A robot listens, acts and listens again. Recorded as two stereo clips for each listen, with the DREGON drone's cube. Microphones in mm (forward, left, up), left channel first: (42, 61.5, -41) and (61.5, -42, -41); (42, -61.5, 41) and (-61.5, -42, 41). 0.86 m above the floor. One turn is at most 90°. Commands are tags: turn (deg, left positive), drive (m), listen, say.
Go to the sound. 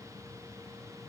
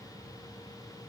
<listen/>
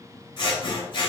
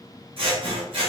<turn deg="90"/>
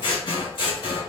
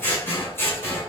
<turn deg="60"/>
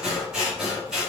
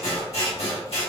<drive m="1.0"/>
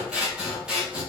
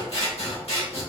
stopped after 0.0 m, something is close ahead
<say>Blocked. The scissors is further on, straight ahead.</say>